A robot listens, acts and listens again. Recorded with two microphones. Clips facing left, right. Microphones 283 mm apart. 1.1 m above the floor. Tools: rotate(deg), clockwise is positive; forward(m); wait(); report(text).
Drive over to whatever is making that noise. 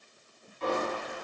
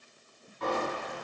rotate(65)
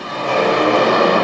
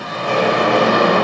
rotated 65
rotate(10)
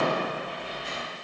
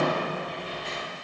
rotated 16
forward(1.0)
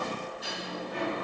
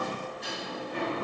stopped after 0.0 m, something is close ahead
report("Blocked. The sliding door is further on, straight ahead.")